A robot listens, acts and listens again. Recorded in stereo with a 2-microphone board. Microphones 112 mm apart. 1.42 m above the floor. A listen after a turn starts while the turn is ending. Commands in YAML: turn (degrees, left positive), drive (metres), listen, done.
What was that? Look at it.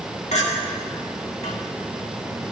turn: 70
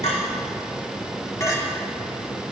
turn: 30
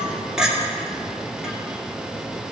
done: "Found it: a clink, straight ahead, 1 to 2 m away."